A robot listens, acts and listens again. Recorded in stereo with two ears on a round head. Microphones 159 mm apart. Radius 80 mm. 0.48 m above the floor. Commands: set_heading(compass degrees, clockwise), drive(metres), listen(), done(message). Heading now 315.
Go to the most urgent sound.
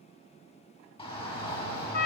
set_heading(285)
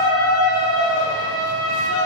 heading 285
set_heading(165)
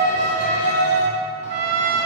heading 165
set_heading(120)
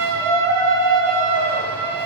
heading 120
set_heading(110)
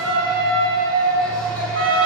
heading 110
drive(1.0)
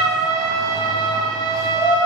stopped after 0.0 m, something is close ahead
done("Something is in my way. I am facing the shout but have not reached it.")